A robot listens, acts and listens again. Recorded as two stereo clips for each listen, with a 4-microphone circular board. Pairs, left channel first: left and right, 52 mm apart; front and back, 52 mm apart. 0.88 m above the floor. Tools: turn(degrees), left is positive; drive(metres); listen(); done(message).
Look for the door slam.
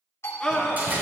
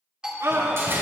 turn(degrees=-145)
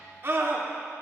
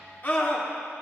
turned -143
done("Facing where the door slam came from. I can't hear it now.")